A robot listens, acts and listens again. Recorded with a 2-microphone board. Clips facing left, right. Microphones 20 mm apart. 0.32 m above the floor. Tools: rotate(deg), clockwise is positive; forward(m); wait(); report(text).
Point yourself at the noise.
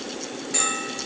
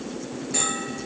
rotate(-30)
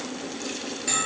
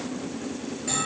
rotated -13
rotate(-160)
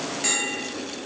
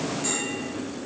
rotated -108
rotate(-55)
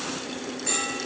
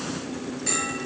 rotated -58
report("Found it: a bell, straight ahead, over 4 m away.")